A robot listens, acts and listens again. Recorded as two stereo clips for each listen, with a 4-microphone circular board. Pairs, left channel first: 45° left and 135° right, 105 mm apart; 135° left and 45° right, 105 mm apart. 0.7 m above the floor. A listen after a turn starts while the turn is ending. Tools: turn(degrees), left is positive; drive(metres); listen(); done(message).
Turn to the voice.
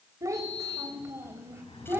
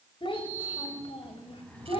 turn(degrees=155)
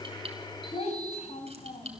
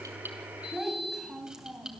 turn(degrees=40)
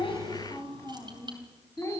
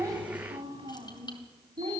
turn(degrees=-20)
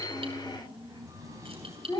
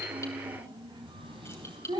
done("Facing the child speaking.")